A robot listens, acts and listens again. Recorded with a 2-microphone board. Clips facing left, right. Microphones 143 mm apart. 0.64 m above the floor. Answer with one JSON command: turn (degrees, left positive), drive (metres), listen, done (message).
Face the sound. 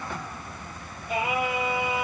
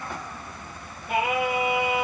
{"turn": -55}
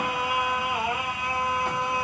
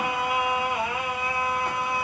{"turn": 25}
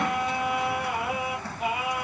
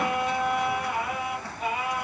{"turn": 10}
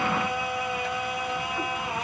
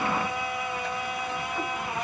{"turn": 10}
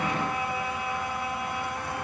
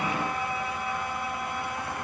{"done": "Facing the singing, 1 to 2 m away."}